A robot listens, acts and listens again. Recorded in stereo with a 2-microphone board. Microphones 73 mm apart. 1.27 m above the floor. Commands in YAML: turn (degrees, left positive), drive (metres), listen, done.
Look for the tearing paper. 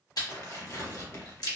turn: 40
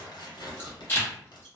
turn: 100
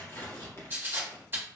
turn: 35
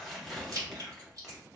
done: "Facing the tearing paper, under 1 m away."